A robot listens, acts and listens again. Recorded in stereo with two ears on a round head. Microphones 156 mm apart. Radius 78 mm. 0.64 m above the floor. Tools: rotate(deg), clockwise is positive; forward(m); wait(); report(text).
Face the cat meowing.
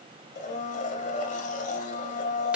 wait()
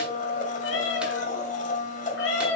rotate(-90)
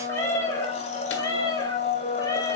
rotate(-20)
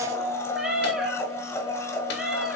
report("Found it: a cat meowing, straight ahead.")